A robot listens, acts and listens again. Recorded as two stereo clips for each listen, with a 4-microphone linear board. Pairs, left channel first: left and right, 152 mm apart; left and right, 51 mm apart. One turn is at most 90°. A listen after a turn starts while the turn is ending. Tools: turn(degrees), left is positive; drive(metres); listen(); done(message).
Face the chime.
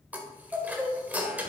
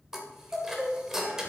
turn(degrees=-30)
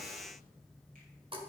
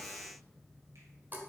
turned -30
turn(degrees=-90)
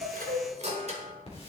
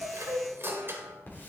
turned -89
turn(degrees=-50)
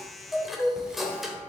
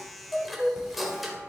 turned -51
done("Facing the chime, 1 to 2 m away.")